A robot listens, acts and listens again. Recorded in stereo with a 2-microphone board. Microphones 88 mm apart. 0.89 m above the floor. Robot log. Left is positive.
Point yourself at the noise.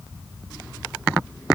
cmd idle
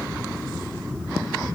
cmd idle
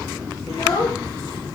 note: The child speaking: about 65° left or 115° left.
cmd yaw +65
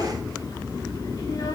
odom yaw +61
cmd idle
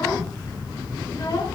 cmd idle
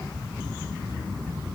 end: I heard a child speaking, but can't make it out now. It was about 5° left or 55° left.